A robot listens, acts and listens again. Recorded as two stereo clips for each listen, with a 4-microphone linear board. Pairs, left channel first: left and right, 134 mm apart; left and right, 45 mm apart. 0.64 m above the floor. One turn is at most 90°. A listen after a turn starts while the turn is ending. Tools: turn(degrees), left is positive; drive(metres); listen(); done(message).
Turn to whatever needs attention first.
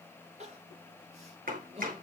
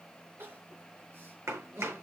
turn(degrees=-50)
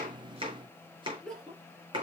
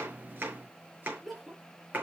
done("Found it: crying, straight ahead, 2 to 4 m away.")